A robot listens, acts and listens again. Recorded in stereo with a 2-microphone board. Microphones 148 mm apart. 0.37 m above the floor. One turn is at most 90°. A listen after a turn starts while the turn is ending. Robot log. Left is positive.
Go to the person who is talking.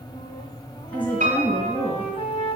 cmd yaw +30
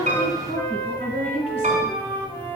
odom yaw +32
note: So it is at 135° left.
cmd yaw +90
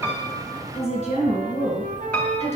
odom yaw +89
note: The woman speaking is now 50° left.
cmd yaw +50
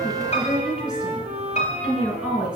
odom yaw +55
cmd fwd 1.0
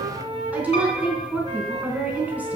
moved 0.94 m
note: The woman speaking is now 10° right.
cmd yaw -10
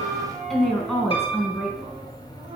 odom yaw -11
cmd fwd 1.0
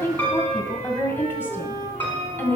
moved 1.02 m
note: The woman speaking is now 15° left.
cmd yaw +15
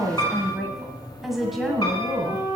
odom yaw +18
cmd fwd 1.0
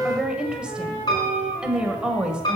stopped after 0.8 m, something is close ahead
end: I am next to the woman speaking.